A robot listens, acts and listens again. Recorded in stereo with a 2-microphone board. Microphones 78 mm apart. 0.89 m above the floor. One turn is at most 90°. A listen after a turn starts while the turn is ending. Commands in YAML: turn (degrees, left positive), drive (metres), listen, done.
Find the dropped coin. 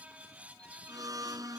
listen: true
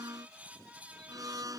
listen: true
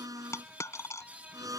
turn: 40
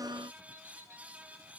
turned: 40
listen: true
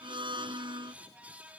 done: "I heard a dropped coin, but can't make it out now. It was about straight ahead or 100° left."